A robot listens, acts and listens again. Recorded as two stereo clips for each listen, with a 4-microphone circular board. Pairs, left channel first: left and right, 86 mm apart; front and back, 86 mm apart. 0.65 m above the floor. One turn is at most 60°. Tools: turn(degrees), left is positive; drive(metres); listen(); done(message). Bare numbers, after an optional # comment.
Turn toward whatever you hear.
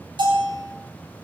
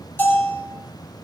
# The bell: 65° right.
turn(-60)
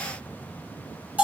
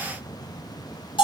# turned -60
# The bell is now 20° right.
turn(-20)
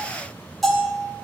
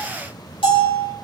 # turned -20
done("Facing the bell.")